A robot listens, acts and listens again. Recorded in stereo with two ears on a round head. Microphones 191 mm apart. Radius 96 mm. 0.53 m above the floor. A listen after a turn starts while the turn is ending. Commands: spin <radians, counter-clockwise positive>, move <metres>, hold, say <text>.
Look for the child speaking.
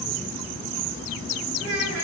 spin -1.22
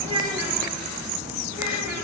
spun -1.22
spin -0.17
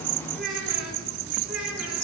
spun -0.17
say Found it: a child speaking, straight ahead.